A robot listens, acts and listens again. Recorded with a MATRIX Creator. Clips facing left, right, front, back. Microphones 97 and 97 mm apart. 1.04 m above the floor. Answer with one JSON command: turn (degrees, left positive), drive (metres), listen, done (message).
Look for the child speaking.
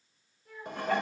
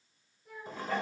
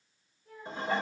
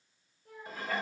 {"turn": 180}
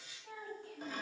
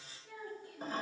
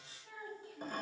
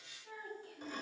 {"turn": 75}
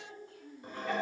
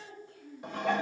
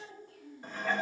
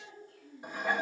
{"done": "Facing the child speaking, over 4 m away."}